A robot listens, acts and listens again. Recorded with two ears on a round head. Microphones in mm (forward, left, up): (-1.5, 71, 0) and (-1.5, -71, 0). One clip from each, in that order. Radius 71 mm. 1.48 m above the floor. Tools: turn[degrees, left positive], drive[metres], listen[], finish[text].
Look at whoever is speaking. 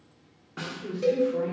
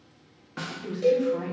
Thought: The woman speaking: about 50° right or 130° right.
Action: turn[-50]
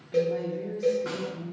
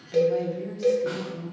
Thought: So it is at 75° right.
Action: turn[-75]
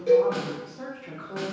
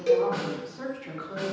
Thought: The woman speaking is now 20° right.
Action: turn[-20]
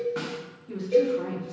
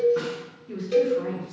Action: finish[Found it: a woman speaking, straight ahead.]